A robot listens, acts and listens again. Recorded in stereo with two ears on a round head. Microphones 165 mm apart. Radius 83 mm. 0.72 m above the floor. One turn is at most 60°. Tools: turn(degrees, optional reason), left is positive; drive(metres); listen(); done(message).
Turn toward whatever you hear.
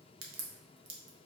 turn(degrees=-60, reason="The crack: about 75° right or 105° right.")
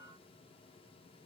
listen()
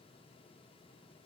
done("I heard a crack, but can't make it out now. It was about 15° right or 45° right.")